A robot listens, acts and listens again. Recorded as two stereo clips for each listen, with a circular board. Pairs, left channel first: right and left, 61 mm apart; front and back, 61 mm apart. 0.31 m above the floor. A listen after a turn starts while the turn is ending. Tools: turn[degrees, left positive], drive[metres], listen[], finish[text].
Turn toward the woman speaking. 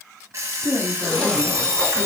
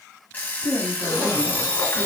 Thought: The woman speaking: 165° left.
Action: turn[165]
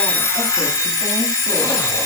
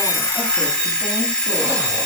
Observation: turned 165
Action: listen[]
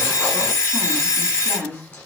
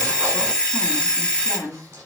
Thought: The woman speaking is now 35° left.
Action: turn[35]
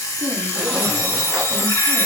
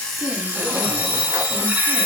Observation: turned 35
Action: listen[]
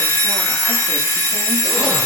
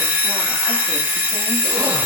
Action: listen[]
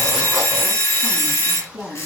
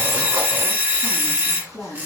Thought: The woman speaking is now 15° right.
Action: turn[-15]
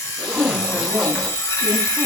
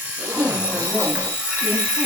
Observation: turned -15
Action: finish[Found it: a woman speaking, straight ahead.]